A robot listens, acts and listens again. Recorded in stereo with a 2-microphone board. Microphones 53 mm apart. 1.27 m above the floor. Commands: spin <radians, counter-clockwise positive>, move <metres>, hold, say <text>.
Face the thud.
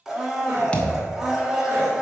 spin 0.35
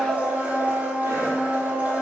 hold
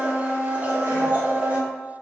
say I heard a thud, but can't make it out now. It was about straight ahead or 140° left.